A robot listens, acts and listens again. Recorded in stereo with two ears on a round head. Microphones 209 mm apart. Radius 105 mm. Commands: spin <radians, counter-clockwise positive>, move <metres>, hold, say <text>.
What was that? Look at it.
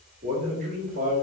spin -0.61
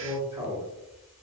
spin -0.26
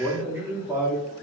spin -0.26
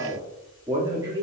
spin -0.26
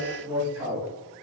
spin -0.17
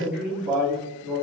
say Found it: a man speaking, straight ahead.